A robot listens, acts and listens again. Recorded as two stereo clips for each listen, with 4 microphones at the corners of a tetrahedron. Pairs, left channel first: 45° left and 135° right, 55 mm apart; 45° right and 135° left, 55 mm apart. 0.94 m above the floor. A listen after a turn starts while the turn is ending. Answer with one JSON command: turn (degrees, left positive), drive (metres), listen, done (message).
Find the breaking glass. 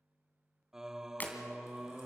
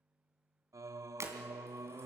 {"turn": 100}
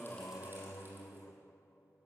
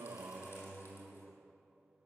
{"done": "I heard breaking glass from this way, but can't make it out now."}